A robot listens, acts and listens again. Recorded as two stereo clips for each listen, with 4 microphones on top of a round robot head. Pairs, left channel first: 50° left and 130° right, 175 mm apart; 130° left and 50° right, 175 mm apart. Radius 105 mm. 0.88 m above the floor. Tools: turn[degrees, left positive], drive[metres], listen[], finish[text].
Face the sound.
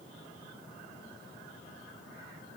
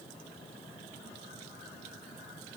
Action: listen[]
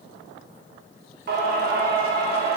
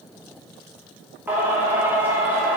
Thought: The singing: 125° right.
Action: turn[-125]
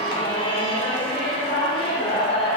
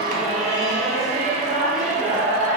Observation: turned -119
Action: finish[Found it: singing, straight ahead.]